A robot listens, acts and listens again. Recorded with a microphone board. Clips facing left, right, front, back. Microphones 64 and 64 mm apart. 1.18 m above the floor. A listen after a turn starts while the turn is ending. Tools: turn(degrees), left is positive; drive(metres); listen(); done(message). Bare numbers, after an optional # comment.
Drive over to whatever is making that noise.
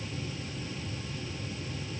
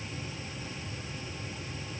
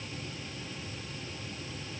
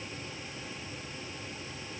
listen()
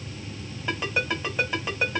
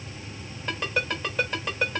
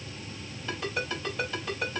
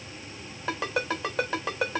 # The ringtone: 175° left.
turn(175)
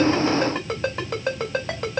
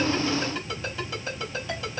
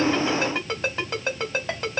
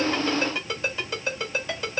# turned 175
# The ringtone is now 60° left.
turn(60)
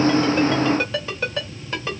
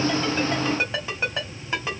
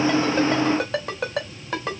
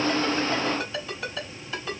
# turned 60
# The ringtone is now 15° right.
turn(-15)
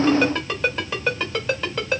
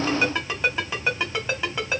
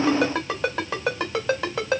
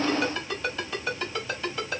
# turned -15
drive(1.0)
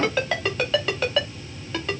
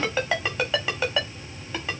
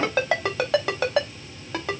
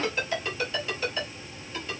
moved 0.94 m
drive(1.0)
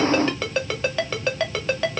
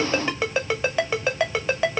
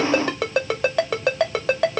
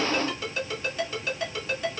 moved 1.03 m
# The ringtone is now 10° right.
turn(-10)
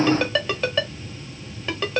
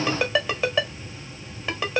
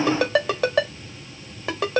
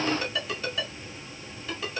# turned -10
# The ringtone is now 10° right.
turn(-10)
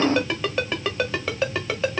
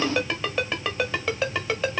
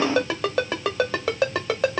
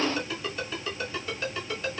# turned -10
drive(1.0)
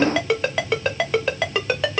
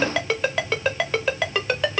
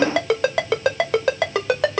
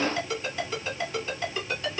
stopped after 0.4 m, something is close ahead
done("Arrived at the ringtone, straight ahead.")